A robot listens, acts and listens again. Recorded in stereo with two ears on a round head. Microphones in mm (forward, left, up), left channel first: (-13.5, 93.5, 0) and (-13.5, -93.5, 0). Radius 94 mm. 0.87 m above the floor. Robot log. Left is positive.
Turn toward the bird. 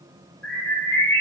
cmd yaw +30
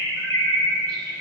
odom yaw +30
note: So it is at 25° right.
cmd yaw -25
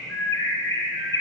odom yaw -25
note: The bird is now 15° left.
cmd yaw +15
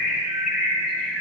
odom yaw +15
end: Found it: a bird, straight ahead, 1 to 2 m away.